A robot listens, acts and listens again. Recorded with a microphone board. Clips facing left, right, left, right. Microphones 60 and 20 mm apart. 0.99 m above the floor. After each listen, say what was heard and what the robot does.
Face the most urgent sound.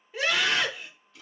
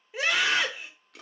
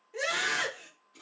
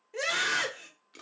Turn 30° right.
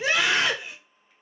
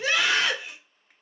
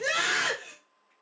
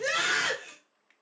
So it is at 20° left. Turn 20° left.
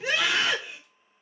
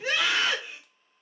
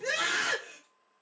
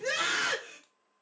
Facing the scream, 1 to 2 m away.